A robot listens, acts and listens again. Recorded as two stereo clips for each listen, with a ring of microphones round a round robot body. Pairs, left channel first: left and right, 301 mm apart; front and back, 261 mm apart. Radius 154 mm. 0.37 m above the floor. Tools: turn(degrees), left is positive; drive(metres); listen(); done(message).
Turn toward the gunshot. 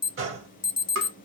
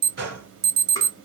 turn(degrees=-130)
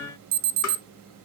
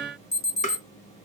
done("Facing where the gunshot came from. I can't hear it now.")